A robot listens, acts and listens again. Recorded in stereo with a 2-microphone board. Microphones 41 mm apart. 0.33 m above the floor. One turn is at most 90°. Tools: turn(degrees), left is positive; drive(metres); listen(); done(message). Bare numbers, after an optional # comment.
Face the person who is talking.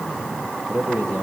# The man speaking: about 70° right or 110° right.
turn(-70)
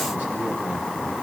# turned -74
listen()
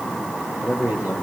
# So it is at 40° right.
turn(-40)
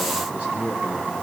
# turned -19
# The man speaking is now 25° right.
turn(-25)
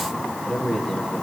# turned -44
# The man speaking is now 15° left.
turn(15)
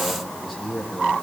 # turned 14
done("Facing the man speaking, over 4 m away.")